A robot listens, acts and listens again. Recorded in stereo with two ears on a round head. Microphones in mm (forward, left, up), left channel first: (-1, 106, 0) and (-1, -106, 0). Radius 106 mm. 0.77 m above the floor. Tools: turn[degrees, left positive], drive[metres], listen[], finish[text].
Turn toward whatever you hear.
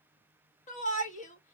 Thought: The shout: about 30° left or 150° left.
Action: turn[30]
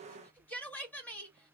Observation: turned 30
Thought: So it is at 10° left.
Action: turn[10]
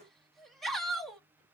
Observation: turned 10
Action: finish[Found it: a shout, straight ahead.]